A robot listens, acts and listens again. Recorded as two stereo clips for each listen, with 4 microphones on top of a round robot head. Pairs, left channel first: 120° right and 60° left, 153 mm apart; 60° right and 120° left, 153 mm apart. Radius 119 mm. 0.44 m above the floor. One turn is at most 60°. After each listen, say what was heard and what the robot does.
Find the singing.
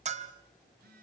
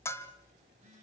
Keep listening.
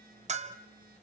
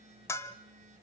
Keep listening.
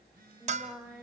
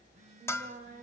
The singing: 140° left. Turn 60° left.
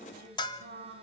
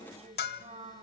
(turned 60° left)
The singing is now 75° left. Turn 60° left.
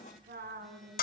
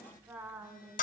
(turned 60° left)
The singing is now 45° left. Turn 45° left.
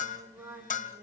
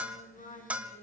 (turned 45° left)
The singing is now 15° right. Turn 15° right.
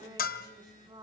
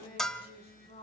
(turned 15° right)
Found it: singing, straight ahead, over 4 m away.